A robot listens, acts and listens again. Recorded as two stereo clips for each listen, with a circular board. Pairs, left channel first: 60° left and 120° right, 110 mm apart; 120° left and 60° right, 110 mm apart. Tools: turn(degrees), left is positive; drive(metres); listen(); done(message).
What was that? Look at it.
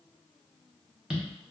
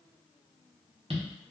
turn(degrees=-40)
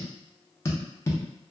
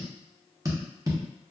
done("Facing the tapping, under 1 m away.")